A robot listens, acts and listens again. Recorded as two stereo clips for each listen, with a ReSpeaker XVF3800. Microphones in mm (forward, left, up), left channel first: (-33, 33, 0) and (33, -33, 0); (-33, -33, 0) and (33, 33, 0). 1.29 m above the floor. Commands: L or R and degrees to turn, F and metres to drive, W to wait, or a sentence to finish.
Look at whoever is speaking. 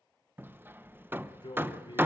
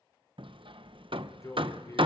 L170
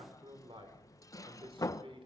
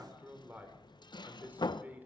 R25
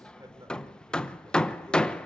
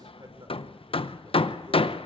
W
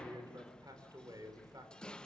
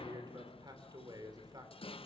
Found it: a man speaking, straight ahead, 2 to 4 m away.